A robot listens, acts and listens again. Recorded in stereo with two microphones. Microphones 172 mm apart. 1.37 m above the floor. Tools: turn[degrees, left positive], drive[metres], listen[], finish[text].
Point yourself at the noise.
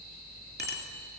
Thought: The bicycle bell: about 75° right or 105° right.
Action: turn[-75]
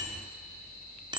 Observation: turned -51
Thought: So it is at 30° right.
Action: turn[-30]
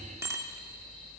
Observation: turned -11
Thought: The bicycle bell is now 15° right.
Action: turn[-15]
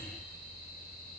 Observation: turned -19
Action: listen[]
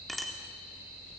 Action: finish[Facing the bicycle bell, 2 to 4 m away.]